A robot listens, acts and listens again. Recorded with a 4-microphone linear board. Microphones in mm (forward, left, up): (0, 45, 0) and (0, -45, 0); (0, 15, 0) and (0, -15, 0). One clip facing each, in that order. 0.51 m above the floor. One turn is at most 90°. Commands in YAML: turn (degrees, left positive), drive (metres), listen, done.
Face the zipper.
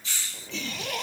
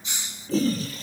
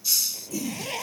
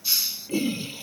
turn: 90
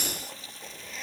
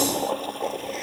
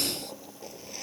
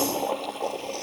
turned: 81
turn: 10
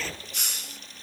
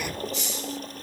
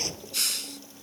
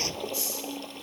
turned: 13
listen: true
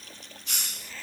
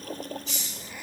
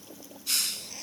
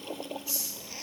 turn: -15
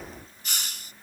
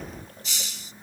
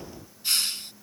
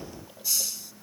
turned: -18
listen: true
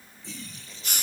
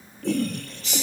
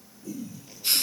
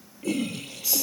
listen: true
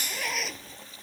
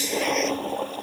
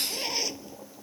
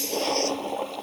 done: "Facing where the zipper came from. I can't hear it now."